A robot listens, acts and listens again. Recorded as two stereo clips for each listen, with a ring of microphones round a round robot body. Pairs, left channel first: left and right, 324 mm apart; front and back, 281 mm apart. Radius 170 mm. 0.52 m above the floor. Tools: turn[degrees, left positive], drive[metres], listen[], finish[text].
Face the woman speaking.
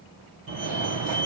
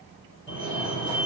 Action: listen[]
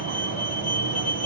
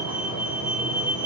Action: listen[]
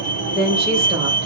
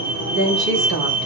Thought: The woman speaking: 160° right.
Action: turn[-160]
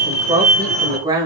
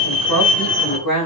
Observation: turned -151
Thought: The woman speaking is now 10° right.
Action: turn[-10]
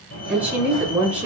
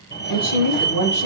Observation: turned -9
Action: finish[Facing the woman speaking.]